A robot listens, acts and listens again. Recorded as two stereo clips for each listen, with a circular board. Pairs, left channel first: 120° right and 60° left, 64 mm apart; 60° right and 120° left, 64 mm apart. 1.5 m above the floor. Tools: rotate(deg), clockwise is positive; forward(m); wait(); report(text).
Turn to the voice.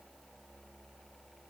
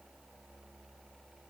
wait()
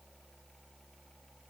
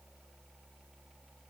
wait()
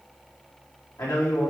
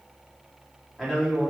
rotate(150)
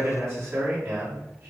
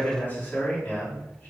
report("Facing the man speaking.")